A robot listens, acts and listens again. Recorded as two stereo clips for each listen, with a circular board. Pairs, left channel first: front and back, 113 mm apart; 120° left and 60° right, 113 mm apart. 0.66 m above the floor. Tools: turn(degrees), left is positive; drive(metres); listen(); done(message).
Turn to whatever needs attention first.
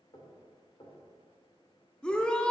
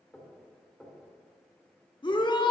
turn(degrees=80)
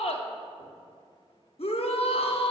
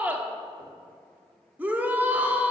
turn(degrees=15)
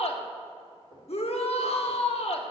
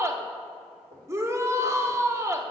done("Facing the shout, 1 to 2 m away.")